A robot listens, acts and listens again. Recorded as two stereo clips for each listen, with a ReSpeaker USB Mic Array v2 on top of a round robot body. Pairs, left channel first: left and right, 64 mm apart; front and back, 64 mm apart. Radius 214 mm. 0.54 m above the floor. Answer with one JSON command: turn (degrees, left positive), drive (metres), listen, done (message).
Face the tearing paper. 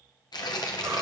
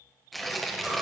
{"turn": 90}
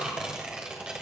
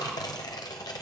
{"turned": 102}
{"turn": -15}
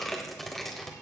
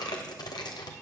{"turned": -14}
{"done": "Facing the tearing paper."}